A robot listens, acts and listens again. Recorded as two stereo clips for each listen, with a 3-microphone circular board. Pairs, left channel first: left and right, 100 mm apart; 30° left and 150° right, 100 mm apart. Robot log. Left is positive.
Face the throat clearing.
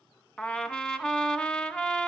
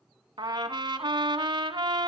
cmd idle
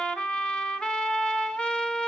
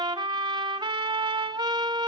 cmd idle
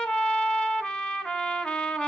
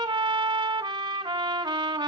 end: I can't make out throat clearing, only a trumpet.